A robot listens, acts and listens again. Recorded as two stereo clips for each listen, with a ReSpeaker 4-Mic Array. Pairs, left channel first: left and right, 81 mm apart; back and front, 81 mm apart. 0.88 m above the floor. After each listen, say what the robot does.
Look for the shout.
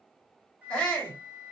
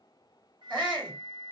Turn 10° left.
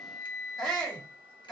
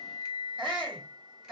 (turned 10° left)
Found it: a shout, straight ahead, 2 to 4 m away.